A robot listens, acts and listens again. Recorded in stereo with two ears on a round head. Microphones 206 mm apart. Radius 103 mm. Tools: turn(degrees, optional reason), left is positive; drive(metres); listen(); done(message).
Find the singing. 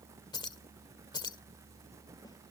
listen()
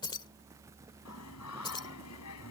turn(degrees=90)
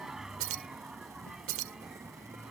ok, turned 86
done("Found it: singing, straight ahead.")